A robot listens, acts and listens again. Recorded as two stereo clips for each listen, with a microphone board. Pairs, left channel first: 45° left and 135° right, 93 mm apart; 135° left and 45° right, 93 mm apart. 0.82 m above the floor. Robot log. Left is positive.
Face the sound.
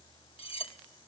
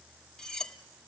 note: The cutlery clinking: 55° left.
cmd yaw +55
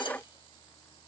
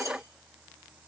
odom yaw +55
cmd idle
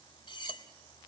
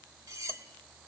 note: The cutlery clinking is now 10° left.
cmd yaw +10
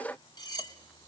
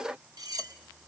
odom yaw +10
end: Facing the cutlery clinking.